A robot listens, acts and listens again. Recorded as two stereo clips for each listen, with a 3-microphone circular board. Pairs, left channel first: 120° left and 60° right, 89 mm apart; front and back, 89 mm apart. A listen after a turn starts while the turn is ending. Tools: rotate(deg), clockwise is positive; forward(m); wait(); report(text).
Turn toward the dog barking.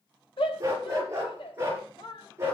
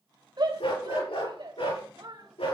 report("Facing the dog barking, over 4 m away.")